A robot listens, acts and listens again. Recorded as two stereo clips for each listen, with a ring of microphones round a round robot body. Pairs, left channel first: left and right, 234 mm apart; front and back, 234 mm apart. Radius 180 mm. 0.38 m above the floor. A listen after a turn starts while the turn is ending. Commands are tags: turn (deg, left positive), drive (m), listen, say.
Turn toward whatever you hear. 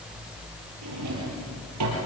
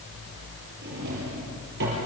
<turn deg="-120"/>
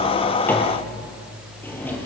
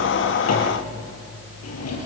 <turn deg="10"/>
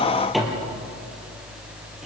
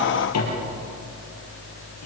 <say>Facing the drawer, over 4 m away.</say>